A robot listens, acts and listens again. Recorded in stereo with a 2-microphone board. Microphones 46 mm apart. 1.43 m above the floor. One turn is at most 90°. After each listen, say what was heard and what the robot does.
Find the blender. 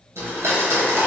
Turn 90° right.
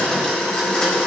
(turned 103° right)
So it is at 20° left. Turn 20° left.
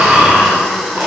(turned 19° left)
Found it: a blender, straight ahead, 1 to 2 m away.